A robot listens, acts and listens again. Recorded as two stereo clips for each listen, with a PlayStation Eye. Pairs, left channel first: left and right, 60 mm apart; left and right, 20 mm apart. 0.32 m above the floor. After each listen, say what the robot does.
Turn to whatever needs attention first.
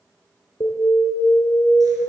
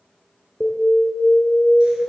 Turn 75° left.
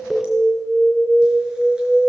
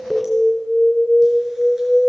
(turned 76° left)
Found it: an alarm, straight ahead, 2 to 4 m away.